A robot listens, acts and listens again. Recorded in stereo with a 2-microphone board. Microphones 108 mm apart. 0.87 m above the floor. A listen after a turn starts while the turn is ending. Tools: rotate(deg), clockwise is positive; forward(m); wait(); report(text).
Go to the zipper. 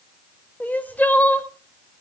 wait()
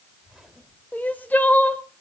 rotate(30)
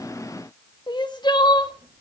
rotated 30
wait()
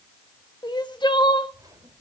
rotate(145)
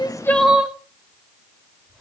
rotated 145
forward(1.0)
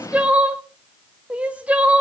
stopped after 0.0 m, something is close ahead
wait()
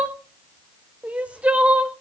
wait()
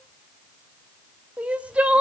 report("Facing where the zipper came from. I can't hear it now. I did not reach it.")